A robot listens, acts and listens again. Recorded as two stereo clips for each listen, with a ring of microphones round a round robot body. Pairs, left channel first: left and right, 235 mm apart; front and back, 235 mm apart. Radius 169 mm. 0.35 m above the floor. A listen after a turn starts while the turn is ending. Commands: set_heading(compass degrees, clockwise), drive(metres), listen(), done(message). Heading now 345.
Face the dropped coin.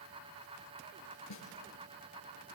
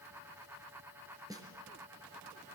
listen()
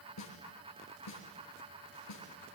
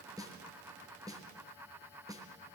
listen()
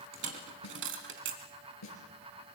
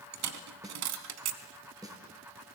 set_heading(130)
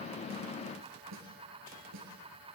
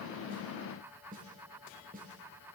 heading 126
done("Facing where the dropped coin came from. I can't hear it now.")